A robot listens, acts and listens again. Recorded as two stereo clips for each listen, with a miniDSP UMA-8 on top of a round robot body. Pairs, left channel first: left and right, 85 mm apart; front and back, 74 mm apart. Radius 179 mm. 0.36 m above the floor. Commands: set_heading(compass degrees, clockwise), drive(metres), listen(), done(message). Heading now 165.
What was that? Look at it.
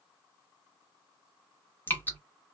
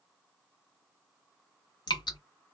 set_heading(145)
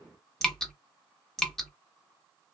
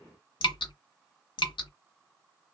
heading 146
done("Facing the dripping, under 1 m away.")